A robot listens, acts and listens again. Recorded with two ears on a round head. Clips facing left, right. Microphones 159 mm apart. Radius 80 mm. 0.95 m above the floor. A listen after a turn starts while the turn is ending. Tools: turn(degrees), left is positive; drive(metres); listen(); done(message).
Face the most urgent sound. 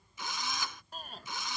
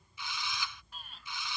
turn(degrees=35)
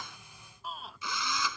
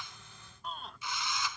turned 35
done("Facing the shout.")